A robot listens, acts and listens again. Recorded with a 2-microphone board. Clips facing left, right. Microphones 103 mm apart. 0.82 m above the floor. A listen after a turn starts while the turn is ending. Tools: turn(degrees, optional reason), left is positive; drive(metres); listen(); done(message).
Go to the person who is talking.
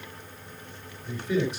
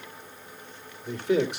turn(degrees=-70, reason="The man speaking: about 70° right or 110° right.")
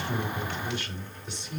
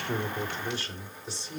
turn(degrees=-35, reason="So it is at 35° right.")
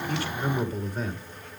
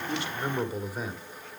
turn(degrees=-10, reason="The man speaking is now 10° right.")
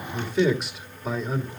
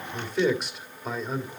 drive(metres=1.0)
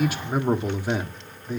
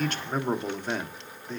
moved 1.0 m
turn(degrees=10, reason="The man speaking is now 10° left.")
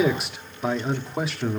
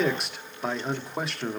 drive(metres=1.0)
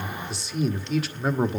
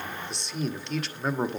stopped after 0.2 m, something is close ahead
done("Arrived at the man speaking, straight ahead.")